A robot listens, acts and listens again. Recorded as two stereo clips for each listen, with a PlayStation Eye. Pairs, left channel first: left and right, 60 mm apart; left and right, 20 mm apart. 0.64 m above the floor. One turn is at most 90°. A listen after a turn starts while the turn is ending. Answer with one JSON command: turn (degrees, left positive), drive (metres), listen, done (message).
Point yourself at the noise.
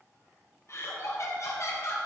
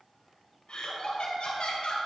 {"turn": 60}
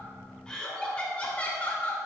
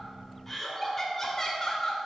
{"turn": 30}
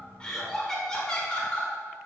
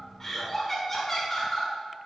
{"turn": 20}
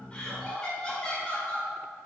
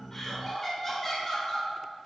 {"turn": 15}
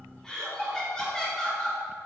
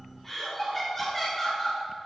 {"turn": 10}
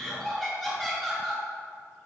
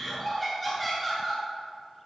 {"done": "Facing the laughter, 2 to 4 m away."}